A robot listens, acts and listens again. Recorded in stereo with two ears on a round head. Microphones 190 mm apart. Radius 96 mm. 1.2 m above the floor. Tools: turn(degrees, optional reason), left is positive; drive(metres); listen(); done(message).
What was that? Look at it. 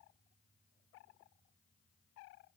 listen()
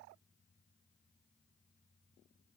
listen()
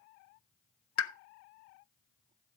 turn(degrees=90)
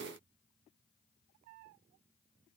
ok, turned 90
done("I heard a pop from this way, but can't make it out now.")